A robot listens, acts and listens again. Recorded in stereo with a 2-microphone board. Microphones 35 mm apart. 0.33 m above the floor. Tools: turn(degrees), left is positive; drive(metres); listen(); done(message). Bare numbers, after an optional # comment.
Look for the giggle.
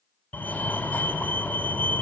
listen()
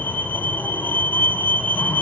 listen()
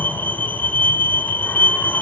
done("I can't make out a giggle to turn to.")